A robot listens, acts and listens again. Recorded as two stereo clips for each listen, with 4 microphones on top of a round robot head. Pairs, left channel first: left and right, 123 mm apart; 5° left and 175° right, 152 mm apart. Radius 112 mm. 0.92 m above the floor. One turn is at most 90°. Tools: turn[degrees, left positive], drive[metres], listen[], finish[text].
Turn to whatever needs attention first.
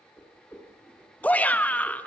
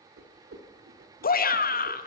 Thought: The shout: 15° left.
Action: turn[15]
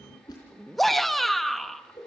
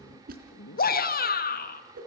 Action: finish[Facing the shout, 1 to 2 m away.]